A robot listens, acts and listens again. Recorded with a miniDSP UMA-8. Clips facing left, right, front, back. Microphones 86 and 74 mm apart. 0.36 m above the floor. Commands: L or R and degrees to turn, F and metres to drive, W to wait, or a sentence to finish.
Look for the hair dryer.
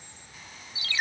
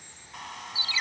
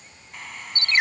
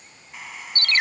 R95
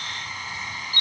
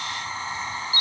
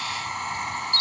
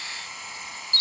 R35
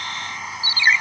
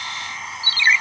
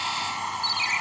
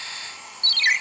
Facing the hair dryer, 1 to 2 m away.